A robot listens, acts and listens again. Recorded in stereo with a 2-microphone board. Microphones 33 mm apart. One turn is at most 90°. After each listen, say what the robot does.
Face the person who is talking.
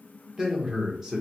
Turn 15° right.
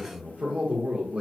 Turn 90° right.
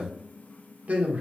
Turn 50° right.
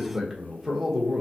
Turn 10° right.
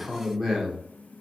Facing the man speaking.